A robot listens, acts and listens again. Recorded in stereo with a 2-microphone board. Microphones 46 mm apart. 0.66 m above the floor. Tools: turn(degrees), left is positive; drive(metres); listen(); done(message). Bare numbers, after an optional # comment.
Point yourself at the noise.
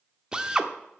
# The drill: about 15° right or 165° right.
turn(-15)
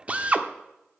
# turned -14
# So it is at 150° right.
turn(-150)
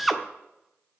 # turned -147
done("Found it: a drill, straight ahead.")